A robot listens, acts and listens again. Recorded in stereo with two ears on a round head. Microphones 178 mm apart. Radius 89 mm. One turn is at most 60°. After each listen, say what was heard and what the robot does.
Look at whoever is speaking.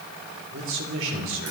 The man speaking: about 65° right or 115° right. Turn 60° right.
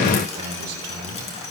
So it is at 50° right. Turn 50° right.
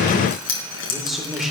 Facing the man speaking, 2 to 4 m away.